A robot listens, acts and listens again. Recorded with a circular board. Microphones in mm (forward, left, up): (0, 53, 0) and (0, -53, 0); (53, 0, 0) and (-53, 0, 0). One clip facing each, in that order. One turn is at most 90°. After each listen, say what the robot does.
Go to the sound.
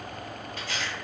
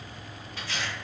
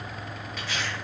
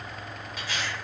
Turn 90° left.
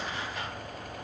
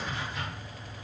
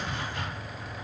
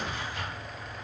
Drive 1.0 m forward.
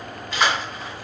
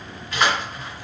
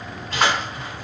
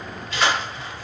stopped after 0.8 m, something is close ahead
I am next to the tearing paper.